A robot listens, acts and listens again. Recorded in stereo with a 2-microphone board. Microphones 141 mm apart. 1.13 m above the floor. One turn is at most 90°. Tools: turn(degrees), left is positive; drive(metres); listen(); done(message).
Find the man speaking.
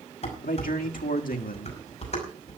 turn(degrees=90)
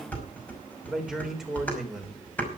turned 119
done("Facing the man speaking.")